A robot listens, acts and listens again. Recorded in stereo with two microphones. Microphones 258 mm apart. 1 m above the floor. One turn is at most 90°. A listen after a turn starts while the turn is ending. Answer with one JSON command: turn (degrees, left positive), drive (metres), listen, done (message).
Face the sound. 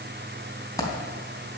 {"turn": 30}
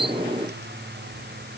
{"listen": true}
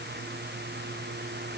{"done": "I heard a dropped coin, but can't make it out now. It was about 15° right or 135° left."}